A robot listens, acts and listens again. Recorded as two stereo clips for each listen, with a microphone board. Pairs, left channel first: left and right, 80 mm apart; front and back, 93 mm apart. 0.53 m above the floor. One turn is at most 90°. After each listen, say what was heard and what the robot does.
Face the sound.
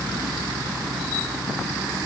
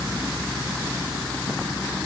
Keep listening.
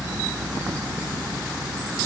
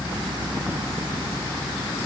Keep listening.
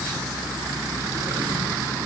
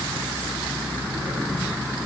I can't make out anything.